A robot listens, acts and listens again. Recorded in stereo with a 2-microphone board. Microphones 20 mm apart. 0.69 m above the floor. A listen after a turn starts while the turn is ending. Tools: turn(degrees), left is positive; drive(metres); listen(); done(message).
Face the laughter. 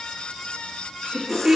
turn(degrees=-60)
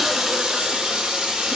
listen()
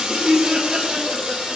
turn(degrees=-55)
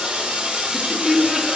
turn(degrees=-15)
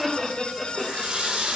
done("Found it: laughter, straight ahead, 1 to 2 m away.")